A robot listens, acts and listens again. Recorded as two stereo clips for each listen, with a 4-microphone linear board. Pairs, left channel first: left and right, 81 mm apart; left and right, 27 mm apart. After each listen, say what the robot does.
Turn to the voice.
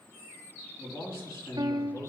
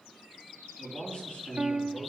Turn 50° left.
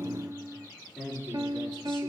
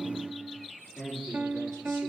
Facing the man speaking.